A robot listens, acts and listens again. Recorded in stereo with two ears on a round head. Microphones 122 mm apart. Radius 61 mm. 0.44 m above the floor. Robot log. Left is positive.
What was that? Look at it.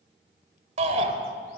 note: The shout: about 50° right or 130° right.
cmd yaw -50
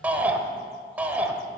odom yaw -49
note: So it is at 15° right.
cmd yaw -15
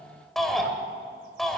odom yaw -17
end: Facing the shout.